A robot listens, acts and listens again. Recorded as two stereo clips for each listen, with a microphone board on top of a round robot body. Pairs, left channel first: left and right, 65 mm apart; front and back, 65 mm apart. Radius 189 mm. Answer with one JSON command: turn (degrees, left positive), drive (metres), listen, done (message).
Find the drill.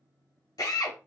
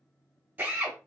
{"turn": 115}
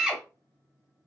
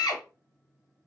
{"turn": -10}
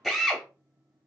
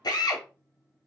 {"done": "Found it: a drill, straight ahead, 1 to 2 m away."}